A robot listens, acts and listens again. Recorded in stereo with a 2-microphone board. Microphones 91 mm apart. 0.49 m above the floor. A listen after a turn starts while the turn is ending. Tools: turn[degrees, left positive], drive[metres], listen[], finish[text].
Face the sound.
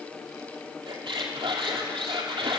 Thought: The squeak: about 65° right or 115° right.
Action: turn[-65]
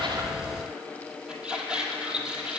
Thought: So it is at 10° right.
Action: turn[-10]
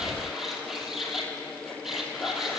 Action: finish[Found it: a squeak, straight ahead.]